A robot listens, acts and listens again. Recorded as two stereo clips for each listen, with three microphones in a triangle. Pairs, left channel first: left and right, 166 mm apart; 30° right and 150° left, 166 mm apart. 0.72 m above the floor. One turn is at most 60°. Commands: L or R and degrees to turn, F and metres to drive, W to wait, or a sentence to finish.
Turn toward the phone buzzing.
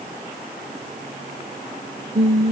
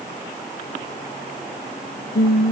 W
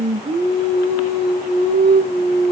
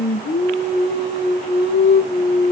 W
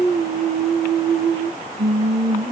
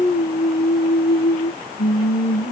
I can't make out a phone buzzing, only singing.